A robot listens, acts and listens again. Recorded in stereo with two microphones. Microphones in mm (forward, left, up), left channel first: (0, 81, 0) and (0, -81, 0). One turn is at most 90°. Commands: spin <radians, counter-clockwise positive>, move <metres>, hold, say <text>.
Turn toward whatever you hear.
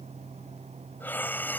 spin 0.52
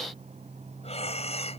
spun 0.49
spin 1.57
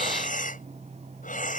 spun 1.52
spin 0.96
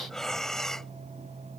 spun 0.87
say Facing the breathing.